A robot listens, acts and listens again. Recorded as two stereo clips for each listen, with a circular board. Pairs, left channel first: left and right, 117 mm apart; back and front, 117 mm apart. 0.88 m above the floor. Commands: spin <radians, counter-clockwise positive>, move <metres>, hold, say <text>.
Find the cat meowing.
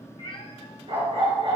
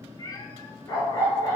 spin 2.18
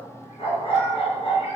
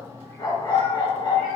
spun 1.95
spin 0.26
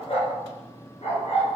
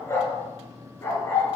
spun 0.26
hold
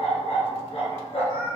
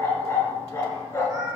spin -1.05
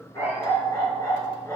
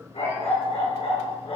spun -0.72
spin -0.35
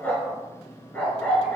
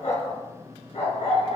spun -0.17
spin -0.17
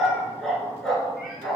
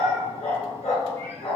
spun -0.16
say Facing where the cat meowing came from. I can't hear it now.